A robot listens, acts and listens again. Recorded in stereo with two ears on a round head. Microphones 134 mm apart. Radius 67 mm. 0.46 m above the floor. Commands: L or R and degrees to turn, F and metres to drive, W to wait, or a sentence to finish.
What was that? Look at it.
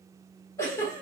L20
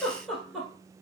Facing the giggle, 1 to 2 m away.